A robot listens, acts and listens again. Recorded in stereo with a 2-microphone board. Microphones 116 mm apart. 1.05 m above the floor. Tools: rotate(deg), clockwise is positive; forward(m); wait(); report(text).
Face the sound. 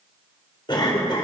rotate(-40)
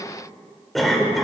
report("Found it: a cough, straight ahead, 2 to 4 m away.")